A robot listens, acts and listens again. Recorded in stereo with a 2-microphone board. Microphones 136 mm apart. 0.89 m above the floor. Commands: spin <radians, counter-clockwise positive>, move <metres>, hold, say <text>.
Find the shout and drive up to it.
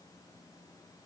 hold
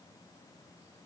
hold
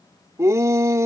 spin -0.35
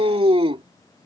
spin -2.36
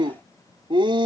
spin -0.70
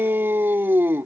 spin -0.26
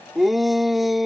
move 1.0
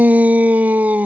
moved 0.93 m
spin -0.26
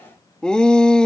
move 1.0
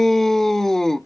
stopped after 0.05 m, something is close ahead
say Arrived at the shout, straight ahead.